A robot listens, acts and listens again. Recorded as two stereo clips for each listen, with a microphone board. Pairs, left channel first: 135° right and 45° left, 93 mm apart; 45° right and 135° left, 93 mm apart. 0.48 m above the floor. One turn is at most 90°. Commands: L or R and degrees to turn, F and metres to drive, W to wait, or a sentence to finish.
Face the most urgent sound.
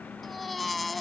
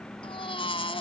R45
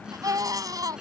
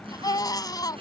Facing the baby crying.